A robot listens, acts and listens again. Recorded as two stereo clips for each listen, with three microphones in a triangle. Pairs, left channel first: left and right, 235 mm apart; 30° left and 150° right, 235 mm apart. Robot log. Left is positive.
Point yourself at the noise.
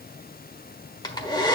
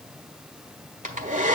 note: The hair dryer: 160° left.
cmd yaw +160
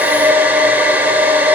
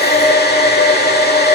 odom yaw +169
note: The hair dryer is now 10° right.
cmd yaw -10
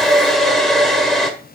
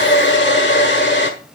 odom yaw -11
end: Found it: a hair dryer, straight ahead.